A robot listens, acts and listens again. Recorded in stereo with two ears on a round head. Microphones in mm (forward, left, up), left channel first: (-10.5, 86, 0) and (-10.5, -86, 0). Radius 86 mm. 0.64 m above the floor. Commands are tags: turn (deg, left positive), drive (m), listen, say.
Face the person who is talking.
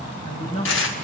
<turn deg="35"/>
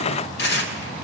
<listen/>
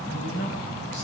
<turn deg="110"/>
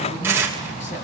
<listen/>
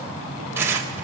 <listen/>
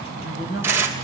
<turn deg="35"/>
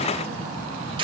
<listen/>
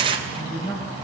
<turn deg="20"/>
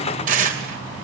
<listen/>
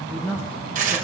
<say>Facing the woman speaking, over 4 m away.</say>